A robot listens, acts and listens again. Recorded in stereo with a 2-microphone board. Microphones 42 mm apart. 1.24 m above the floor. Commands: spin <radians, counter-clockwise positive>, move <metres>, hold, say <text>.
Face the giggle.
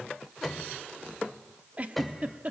spin -0.61
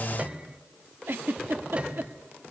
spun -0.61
spin -1.83
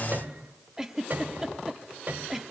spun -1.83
spin -0.17
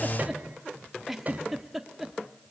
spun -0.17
say Facing the giggle, 1 to 2 m away.